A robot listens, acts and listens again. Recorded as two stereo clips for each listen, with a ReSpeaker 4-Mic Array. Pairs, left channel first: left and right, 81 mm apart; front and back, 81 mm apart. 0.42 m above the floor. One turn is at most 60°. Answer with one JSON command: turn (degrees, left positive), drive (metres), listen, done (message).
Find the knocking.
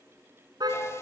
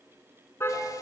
{"listen": true}
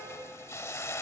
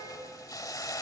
{"listen": true}
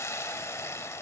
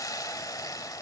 {"done": "I can't make out knocking to turn to."}